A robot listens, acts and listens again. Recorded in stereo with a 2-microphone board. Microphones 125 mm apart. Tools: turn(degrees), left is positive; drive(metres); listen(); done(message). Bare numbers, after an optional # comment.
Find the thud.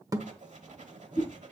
# The thud: about 30° right or 150° right.
turn(-30)
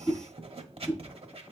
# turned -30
listen()
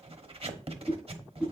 done("I heard a thud, but can't make it out now. It was about straight ahead or 120° right.")